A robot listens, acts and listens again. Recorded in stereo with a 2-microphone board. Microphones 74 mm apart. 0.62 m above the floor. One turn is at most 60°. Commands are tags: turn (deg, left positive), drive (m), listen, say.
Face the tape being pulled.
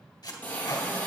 <turn deg="60"/>
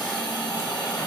<listen/>
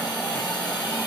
<listen/>
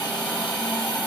<say>I heard tape being pulled, but can't make it out now. It was about straight ahead or 60° left.</say>